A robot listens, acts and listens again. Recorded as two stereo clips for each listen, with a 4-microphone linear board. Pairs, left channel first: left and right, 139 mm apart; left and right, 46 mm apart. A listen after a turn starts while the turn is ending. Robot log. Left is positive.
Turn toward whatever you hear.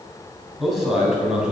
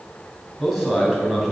cmd yaw -30
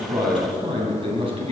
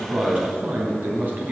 note: So it is at 135° right.
cmd yaw -135
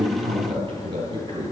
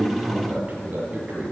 note: The man speaking is now 35° right.
cmd yaw -35
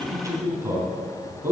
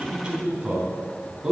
note: The man speaking is now 15° right.
cmd yaw -15
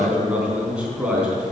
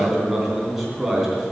note: The man speaking is now 10° right.
cmd yaw -10
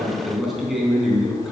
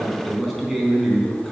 end: Found it: a man speaking, straight ahead, 2 to 4 m away.